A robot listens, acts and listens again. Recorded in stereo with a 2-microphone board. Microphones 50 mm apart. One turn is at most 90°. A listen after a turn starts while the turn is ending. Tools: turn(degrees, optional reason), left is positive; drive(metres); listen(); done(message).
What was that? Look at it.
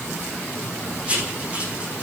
turn(degrees=-25, reason="The writing: about 25° right or 155° right.")
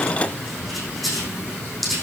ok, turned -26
done("Found it: writing, straight ahead, over 4 m away.")